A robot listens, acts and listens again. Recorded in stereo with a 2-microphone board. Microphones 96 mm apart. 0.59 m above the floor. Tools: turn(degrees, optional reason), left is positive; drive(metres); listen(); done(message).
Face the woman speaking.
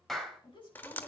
turn(degrees=60, reason="The woman speaking: about 60° left or 120° left.")
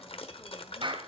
listen()
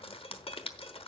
listen()
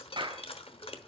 done("I heard a woman speaking, but can't make it out now. It was about straight ahead or 60° left.")